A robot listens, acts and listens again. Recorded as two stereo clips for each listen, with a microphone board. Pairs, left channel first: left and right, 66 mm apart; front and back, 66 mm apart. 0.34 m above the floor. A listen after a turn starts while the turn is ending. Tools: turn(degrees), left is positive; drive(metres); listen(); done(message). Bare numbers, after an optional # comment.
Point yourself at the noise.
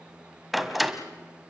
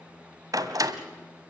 # The door slam: straight behind.
turn(180)
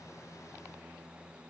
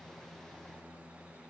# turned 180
done("Facing where the door slam came from. I can't hear it now.")